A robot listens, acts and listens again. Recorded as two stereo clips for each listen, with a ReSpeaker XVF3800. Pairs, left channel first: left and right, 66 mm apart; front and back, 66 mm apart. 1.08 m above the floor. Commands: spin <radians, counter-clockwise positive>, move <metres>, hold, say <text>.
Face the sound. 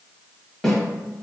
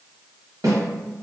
spin 3.05
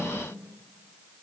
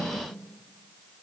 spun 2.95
spin 0.17
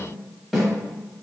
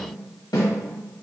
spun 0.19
say Facing the snare drum.